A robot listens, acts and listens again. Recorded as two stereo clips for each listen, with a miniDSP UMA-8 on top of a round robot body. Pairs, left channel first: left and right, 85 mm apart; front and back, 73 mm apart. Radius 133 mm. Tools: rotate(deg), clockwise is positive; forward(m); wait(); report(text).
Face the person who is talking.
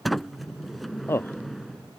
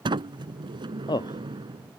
rotate(-25)
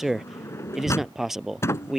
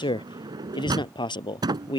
report("Found it: a man speaking, straight ahead.")